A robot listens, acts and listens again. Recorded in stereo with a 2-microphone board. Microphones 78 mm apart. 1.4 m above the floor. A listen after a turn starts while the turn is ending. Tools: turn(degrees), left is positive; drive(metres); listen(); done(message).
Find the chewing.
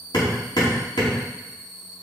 listen()
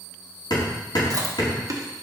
turn(degrees=-45)
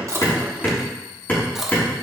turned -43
done("Found it: chewing, straight ahead.")